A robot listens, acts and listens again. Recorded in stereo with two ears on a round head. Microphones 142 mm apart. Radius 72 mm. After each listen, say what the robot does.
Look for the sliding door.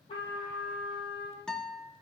Keep listening.
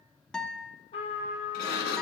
Turn 70° left.
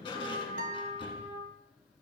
Turn 35° left.
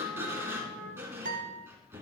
Turn 15° right.
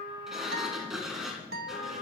Found it: a sliding door, straight ahead, 1 to 2 m away.